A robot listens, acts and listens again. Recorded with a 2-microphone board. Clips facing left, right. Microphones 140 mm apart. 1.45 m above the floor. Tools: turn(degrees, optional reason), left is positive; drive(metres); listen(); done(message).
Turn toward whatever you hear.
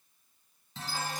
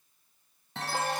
turn(degrees=-65, reason="The chime: about 65° right or 115° right.")
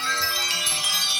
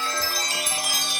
turn(degrees=-45, reason="So it is at 45° right.")
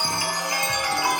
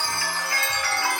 turn(degrees=15, reason="The chime is now 15° left.")
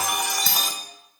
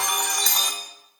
done("Facing the chime.")